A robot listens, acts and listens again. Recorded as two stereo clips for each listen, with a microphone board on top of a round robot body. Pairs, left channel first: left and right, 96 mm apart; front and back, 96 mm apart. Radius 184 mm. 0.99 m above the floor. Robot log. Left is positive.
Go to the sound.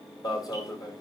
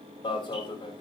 note: The alarm: 40° left.
cmd yaw +40
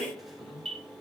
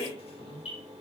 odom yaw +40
cmd fwd 1.0
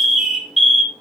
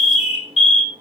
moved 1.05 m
cmd fwd 1.0
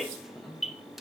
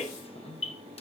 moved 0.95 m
cmd idle
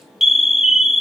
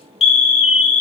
cmd fwd 1.0
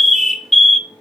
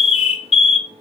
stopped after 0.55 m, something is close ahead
end: I am next to the alarm.